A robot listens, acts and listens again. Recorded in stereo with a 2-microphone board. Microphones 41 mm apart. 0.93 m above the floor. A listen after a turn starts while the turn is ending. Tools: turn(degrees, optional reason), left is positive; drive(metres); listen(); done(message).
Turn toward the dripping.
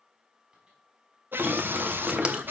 turn(degrees=-20, reason="The dripping: about 20° right or 160° right.")
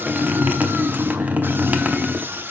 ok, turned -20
turn(degrees=-140, reason="So it is at 140° right.")
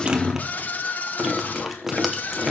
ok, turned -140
done("Facing the dripping.")